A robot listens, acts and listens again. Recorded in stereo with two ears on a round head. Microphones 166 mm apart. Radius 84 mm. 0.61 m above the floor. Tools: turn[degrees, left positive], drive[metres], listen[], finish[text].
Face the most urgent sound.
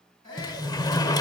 Thought: The shout: about 20° left or 160° left.
Action: turn[20]
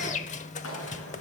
Action: listen[]
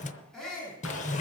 Action: finish[Found it: a shout, straight ahead.]